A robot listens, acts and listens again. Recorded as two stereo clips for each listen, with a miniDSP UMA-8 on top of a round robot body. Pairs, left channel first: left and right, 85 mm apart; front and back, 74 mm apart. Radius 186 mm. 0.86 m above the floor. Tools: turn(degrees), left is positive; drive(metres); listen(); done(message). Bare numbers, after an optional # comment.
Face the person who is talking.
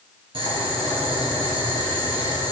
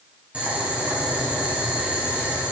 listen()
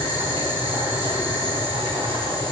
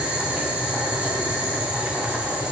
listen()
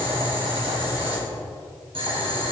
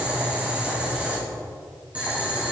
done("I can't make out anyone speaking to turn to.")